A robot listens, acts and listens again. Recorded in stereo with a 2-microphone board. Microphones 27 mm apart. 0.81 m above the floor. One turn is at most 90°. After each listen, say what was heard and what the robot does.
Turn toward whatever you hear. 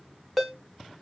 Turn 30° left.
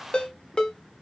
So it is at 145° left. Turn 90° left.
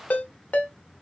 The ringtone is now 95° left. Turn 90° left.
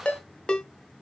The ringtone is now 40° left. Turn 40° left.
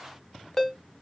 The ringtone is now 15° left. Turn 15° left.
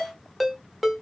Found it: a ringtone, straight ahead.